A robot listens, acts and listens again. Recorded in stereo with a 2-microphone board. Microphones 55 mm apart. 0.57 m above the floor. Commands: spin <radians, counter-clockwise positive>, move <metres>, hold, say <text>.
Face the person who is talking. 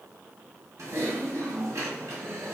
hold
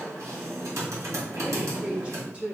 spin -0.35
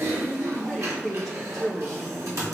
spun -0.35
say Found it: a woman speaking, straight ahead.